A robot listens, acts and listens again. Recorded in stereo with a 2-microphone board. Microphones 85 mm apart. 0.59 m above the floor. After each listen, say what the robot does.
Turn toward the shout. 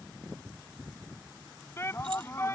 Turn 30° left.
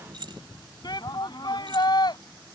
Turn 125° left.
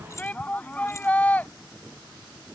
Turn 15° left.
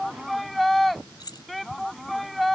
Found it: a shout, straight ahead.